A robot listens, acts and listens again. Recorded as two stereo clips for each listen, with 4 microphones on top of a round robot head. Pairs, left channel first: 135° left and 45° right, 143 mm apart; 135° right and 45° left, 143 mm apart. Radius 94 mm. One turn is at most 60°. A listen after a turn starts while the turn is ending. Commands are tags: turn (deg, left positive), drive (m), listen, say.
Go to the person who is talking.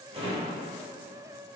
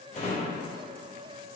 <listen/>
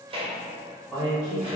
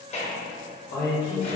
<turn deg="-60"/>
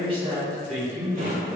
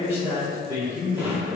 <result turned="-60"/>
<turn deg="-60"/>
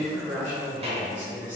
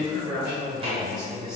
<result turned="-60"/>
<turn deg="-40"/>
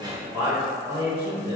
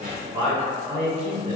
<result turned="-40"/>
<drive m="1.0"/>
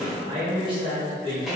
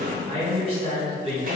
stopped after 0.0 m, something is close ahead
<say>Blocked. The man speaking is further on, straight ahead.</say>